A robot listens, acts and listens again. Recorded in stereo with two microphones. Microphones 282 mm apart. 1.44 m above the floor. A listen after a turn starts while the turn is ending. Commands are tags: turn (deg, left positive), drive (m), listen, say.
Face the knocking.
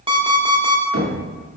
<turn deg="-55"/>
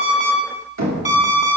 <turn deg="-75"/>
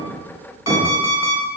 <turn deg="-15"/>
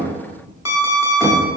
<listen/>
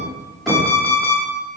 <say>Found it: knocking, straight ahead.</say>